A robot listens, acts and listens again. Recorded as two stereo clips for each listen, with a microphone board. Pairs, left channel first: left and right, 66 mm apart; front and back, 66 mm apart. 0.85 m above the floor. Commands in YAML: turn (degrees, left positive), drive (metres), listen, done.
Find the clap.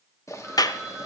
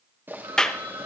turn: 80
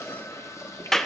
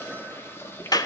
done: "Found it: a clap, straight ahead."